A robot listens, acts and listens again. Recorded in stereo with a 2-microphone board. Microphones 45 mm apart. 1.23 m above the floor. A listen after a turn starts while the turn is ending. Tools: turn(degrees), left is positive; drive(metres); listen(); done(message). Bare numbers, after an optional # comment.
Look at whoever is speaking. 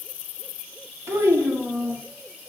# The child speaking: about 70° right or 110° right.
turn(-70)
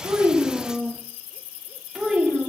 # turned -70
# So it is at 10° right.
turn(-10)
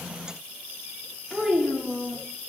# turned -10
done("Facing the child speaking, under 1 m away.")